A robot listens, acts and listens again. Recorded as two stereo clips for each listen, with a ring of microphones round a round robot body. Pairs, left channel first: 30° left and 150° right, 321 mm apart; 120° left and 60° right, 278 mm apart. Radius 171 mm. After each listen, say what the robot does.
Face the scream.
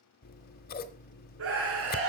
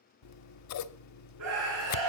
Turn 100° right.
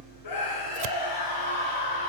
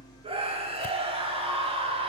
Turn 10° left.
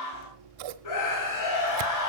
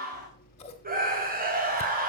Found it: a scream, straight ahead, 2 to 4 m away.